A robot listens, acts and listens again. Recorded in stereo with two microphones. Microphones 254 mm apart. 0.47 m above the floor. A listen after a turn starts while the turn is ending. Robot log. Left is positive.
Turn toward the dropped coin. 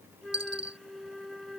cmd yaw -90
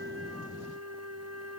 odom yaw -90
end: I heard a dropped coin from this way, but can't make it out now.